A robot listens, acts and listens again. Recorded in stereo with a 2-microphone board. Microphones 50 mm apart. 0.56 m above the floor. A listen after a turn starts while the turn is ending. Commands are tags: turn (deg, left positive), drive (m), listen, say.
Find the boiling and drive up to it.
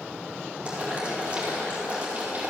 <turn deg="-25"/>
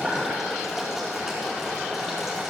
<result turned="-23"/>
<drive m="1.0"/>
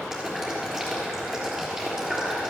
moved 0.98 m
<drive m="1.0"/>
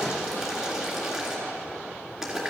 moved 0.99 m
<turn deg="-10"/>
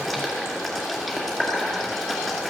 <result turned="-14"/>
<drive m="1.0"/>
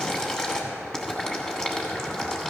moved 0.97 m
<turn deg="15"/>
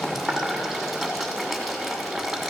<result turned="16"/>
<drive m="1.0"/>
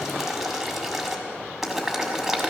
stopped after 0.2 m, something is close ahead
<say>I am next to the boiling.</say>